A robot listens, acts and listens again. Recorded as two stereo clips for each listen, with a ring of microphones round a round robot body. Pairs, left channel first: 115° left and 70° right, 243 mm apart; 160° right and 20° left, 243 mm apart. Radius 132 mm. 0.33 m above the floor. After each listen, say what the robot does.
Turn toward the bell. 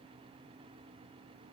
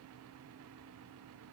Keep listening.
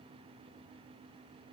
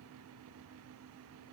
Keep listening.
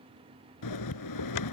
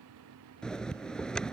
Turn 115° left.
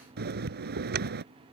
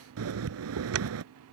Turn 15° right.
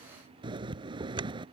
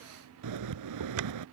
Facing the bell.